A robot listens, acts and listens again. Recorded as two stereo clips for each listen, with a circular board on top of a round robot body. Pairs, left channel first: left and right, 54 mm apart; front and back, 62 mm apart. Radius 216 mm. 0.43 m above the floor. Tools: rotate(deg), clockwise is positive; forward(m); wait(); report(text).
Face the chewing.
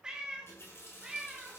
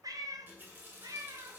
wait()
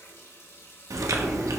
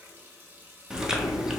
rotate(100)
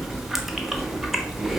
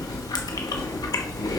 report("Facing the chewing.")